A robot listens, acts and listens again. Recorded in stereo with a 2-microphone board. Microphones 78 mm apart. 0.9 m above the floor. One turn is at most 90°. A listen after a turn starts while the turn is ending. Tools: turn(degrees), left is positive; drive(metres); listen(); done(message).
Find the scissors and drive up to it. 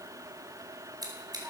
turn(degrees=-55)
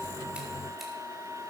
listen()
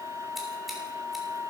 listen()
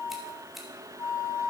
done("I heard scissors, but can't make it out now. It was about straight ahead or 70° right. I did not reach it.")